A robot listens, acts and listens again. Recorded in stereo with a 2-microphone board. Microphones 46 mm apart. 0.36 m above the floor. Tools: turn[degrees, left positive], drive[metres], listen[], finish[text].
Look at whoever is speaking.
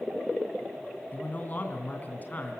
Thought: The man speaking: about 40° left or 140° left.
Action: turn[40]
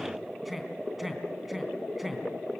Action: finish[Found it: a man speaking, straight ahead.]